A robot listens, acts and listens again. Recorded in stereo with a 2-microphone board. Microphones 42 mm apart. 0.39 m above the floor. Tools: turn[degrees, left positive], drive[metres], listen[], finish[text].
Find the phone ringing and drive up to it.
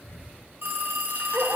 Thought: The phone ringing: about 70° right or 110° right.
Action: turn[-70]
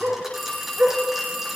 Action: drive[1.0]
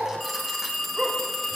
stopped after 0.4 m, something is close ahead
Action: finish[Blocked. The phone ringing is further on, straight ahead.]